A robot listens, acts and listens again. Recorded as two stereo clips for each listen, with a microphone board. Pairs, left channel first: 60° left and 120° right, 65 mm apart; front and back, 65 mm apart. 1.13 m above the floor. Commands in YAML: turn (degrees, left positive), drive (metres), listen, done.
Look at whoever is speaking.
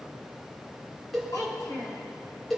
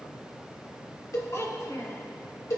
turn: 35
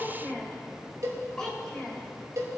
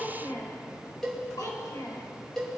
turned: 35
turn: -20
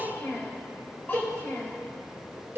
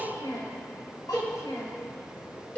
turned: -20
done: "Facing the child speaking, 2 to 4 m away."